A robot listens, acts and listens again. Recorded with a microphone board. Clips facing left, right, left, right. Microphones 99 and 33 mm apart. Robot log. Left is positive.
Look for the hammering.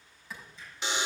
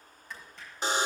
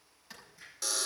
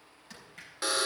note: The hammering: about 70° right or 110° right.
cmd yaw -70
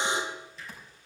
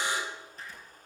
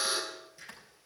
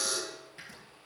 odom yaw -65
note: So it is at 45° right.
cmd yaw -45
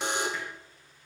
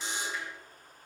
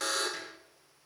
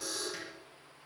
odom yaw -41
cmd idle
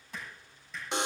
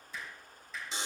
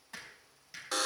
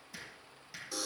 end: Found it: hammering, straight ahead.